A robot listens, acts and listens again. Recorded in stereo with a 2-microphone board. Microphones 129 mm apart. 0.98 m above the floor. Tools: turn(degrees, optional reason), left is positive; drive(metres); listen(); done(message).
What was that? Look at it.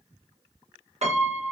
turn(degrees=-60, reason="The piano: about 60° right or 120° right.")
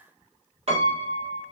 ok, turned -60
turn(degrees=-55, reason="So it is at 55° right.")
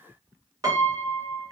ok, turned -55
turn(degrees=-30, reason="The piano is now 30° right.")
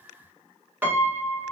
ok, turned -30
turn(degrees=-15, reason="The piano is now 15° right.")
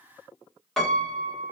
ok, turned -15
done("Found it: a piano, straight ahead, 1 to 2 m away.")